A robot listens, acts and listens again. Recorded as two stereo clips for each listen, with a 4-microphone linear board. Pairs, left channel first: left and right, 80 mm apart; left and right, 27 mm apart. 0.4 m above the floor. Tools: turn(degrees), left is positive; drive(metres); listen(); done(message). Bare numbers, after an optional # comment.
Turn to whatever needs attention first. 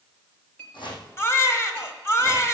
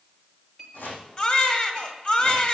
# The baby crying: about 35° left or 145° left.
turn(35)
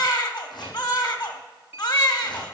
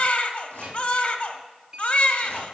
# So it is at 100° left.
turn(100)
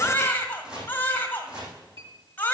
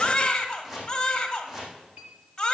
# The baby crying is now 30° left.
turn(30)
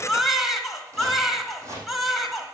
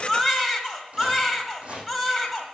done("Facing the baby crying.")